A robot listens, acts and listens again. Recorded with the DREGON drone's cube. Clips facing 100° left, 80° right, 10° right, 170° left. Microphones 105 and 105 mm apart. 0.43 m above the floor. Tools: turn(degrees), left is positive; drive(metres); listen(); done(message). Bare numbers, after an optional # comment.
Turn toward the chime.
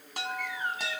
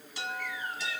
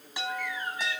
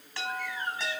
# The chime: 65° left.
turn(65)
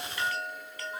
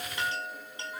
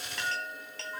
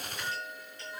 # The chime is now 10° right.
turn(-10)
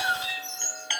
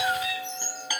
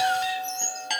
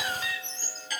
done("Facing the chime, 2 to 4 m away.")